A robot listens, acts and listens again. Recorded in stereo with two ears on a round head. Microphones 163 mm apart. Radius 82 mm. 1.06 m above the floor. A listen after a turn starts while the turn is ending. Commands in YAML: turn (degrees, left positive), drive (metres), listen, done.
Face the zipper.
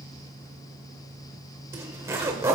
turn: -15
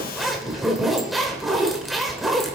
done: "Found it: a zipper, straight ahead."